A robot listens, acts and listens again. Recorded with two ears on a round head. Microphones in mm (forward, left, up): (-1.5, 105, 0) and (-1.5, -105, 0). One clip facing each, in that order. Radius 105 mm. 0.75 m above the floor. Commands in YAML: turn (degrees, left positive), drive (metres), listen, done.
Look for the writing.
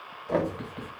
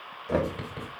turn: -45
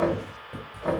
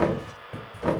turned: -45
done: "Facing the writing."